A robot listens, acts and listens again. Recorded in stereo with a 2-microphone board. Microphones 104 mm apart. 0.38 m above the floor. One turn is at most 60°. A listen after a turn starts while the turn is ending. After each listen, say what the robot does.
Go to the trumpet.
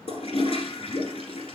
Keep listening.
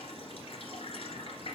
Keep listening.
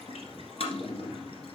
I can't make out a trumpet, only a toilet flushing.